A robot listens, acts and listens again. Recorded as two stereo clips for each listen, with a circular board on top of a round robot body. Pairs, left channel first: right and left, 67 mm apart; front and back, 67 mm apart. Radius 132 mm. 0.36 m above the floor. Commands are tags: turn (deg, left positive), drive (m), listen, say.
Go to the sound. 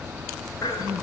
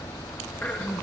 <turn deg="-65"/>
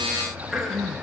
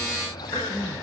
<drive m="1.0"/>
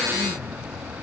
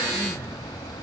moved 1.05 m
<listen/>
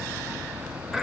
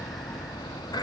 <drive m="1.0"/>
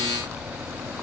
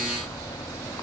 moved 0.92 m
<listen/>
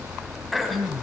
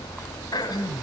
<drive m="1.0"/>
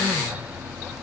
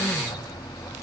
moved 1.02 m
<listen/>
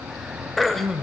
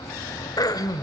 <drive m="1.0"/>
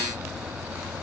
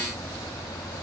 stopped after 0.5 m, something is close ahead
<listen/>
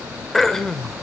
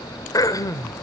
<say>I am next to the throat clearing.</say>